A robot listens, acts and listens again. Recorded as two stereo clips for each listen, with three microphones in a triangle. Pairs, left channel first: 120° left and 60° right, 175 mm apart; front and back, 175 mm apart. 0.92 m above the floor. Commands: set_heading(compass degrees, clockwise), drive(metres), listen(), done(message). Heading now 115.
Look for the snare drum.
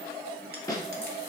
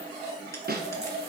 set_heading(290)
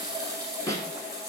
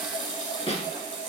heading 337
set_heading(287)
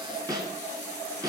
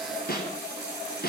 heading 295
done("Facing the snare drum.")